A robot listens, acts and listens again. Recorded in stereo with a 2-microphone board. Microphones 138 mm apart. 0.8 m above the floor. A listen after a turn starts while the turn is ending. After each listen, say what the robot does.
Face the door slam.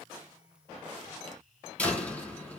Turn 30° left.
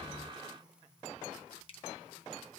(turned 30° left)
Keep listening.
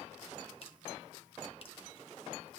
I heard a door slam, but can't make it out now. It was about 20° right or 140° left.